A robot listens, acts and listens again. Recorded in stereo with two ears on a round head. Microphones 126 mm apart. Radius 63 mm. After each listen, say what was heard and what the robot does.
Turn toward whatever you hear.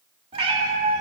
The cat meowing: about 45° right or 135° right. Turn 45° right.
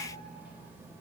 Keep listening.
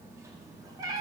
So it is at 30° right. Turn 30° right.
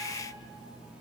Keep listening.
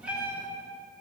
The cat meowing is now 10° right. Turn 10° right.
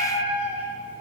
The cat meowing is now 10° right. Turn 10° right.
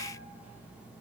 Keep listening.
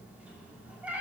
The cat meowing is now 10° right. Turn 10° right.
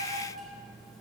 Keep listening.
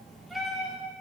Facing the cat meowing.